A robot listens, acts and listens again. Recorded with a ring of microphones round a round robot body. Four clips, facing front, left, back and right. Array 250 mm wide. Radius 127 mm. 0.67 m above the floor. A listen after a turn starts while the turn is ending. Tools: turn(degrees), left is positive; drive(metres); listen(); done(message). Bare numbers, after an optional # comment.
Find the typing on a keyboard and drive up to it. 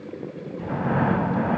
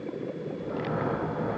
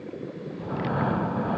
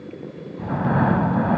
listen()
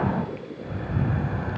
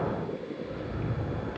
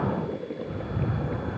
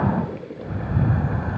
listen()
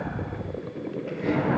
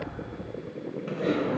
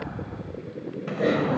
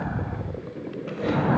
# The typing on a keyboard: straight behind.
turn(180)
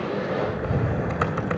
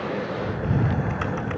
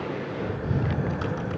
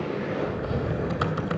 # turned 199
# Nothing new. It was at 20° right.
turn(-20)
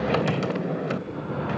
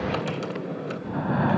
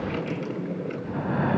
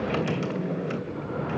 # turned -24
drive(1.0)
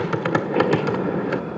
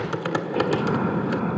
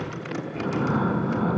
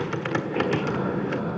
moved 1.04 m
# The typing on a keyboard is now 15° left.
turn(15)
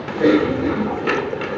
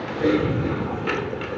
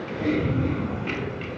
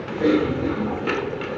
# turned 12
drive(1.0)
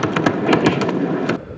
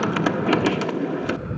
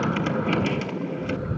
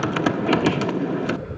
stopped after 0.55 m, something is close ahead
done("Arrived at the typing on a keyboard, straight ahead.")